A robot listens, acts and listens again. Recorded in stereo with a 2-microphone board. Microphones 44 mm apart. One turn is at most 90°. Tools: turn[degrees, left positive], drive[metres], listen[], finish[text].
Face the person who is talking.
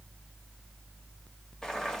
Action: listen[]
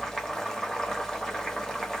Action: listen[]
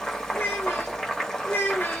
Thought: The child speaking: about 60° left or 120° left.
Action: turn[60]
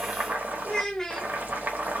Thought: So it is at 10° left.
Action: turn[10]
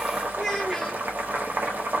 Action: listen[]
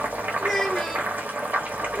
Action: finish[Found it: a child speaking, straight ahead.]